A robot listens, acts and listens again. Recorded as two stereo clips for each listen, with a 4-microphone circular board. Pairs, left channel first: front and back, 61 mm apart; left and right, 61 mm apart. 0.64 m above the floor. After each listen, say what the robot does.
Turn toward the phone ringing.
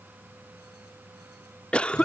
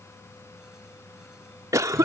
Keep listening.
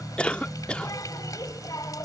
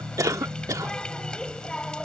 Keep listening.
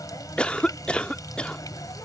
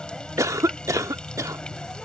I can't make out a phone ringing, only a cough and a running tap.